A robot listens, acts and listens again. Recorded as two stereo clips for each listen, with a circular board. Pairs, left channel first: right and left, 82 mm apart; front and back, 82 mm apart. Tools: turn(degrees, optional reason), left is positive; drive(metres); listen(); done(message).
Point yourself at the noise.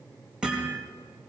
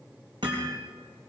turn(degrees=170, reason="The hammering: 170° left.")
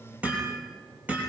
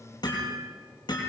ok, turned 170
turn(degrees=20, reason="The hammering is now 20° left.")
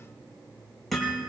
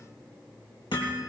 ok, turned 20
done("Facing the hammering, over 4 m away.")